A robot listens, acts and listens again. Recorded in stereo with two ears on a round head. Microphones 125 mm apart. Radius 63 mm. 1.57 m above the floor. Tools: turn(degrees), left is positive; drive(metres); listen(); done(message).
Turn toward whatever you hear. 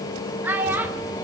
turn(degrees=-30)
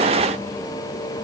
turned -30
listen()
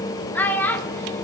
turn(degrees=15)
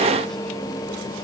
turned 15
listen()
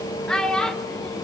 done("Found it: a child speaking, straight ahead.")